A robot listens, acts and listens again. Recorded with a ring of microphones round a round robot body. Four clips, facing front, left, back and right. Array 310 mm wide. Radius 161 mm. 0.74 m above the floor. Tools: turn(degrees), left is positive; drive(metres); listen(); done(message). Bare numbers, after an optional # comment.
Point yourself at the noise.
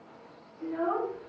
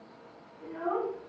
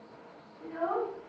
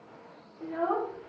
# The child speaking: 85° right.
turn(-85)
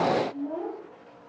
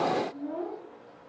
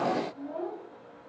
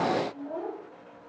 # The child speaking is now 30° right.
turn(-30)
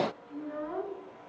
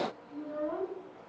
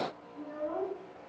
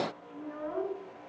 done("Facing the child speaking.")